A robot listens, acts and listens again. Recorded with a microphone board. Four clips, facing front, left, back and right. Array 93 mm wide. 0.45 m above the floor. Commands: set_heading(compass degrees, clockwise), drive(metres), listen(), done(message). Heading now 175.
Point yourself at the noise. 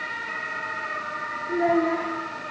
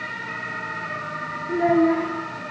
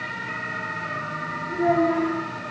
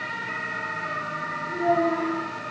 set_heading(125)
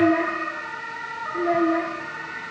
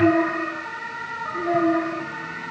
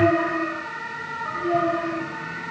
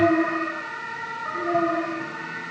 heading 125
set_heading(115)
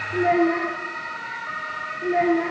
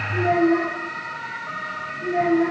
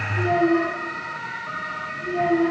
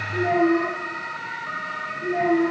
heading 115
done("Facing the child speaking.")